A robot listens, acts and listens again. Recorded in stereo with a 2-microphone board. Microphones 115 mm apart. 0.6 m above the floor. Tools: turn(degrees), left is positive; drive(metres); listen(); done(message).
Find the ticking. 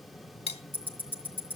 turn(degrees=20)
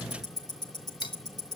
turn(degrees=140)
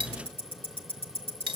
turn(degrees=50)
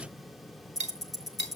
done("Found it: ticking, straight ahead.")